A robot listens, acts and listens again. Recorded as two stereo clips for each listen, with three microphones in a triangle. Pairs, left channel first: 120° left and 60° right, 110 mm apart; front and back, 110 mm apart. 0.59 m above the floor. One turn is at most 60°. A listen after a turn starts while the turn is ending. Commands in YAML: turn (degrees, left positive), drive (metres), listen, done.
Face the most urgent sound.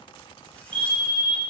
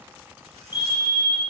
turn: -40
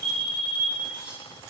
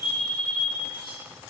turn: -15
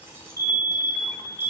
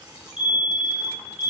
done: "Found it: a fire alarm, straight ahead, 2 to 4 m away."